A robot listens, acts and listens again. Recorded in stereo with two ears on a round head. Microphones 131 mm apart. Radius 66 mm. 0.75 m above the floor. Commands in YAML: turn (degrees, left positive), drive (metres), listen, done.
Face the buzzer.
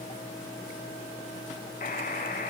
turn: 55
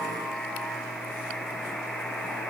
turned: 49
done: "Found it: a buzzer, straight ahead, 2 to 4 m away."